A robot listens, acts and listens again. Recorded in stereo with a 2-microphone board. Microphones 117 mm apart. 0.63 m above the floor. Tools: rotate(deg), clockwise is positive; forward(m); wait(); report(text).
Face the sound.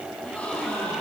rotate(-30)
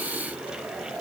wait()
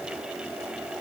report("I heard a gasp, but can't make it out now. It was about 20° right or 140° left.")